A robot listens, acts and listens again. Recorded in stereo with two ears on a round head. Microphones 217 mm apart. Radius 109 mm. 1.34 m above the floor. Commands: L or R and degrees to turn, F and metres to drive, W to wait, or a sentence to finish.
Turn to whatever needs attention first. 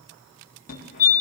L35
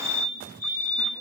L105
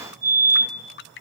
R15
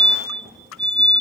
Facing the fire alarm, over 4 m away.